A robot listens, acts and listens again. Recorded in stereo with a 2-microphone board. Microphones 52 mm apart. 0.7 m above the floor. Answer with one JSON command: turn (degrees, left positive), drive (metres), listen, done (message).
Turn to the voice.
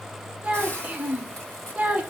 {"turn": -25}
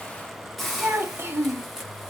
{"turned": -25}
{"turn": -125}
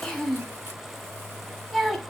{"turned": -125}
{"done": "Facing the child speaking."}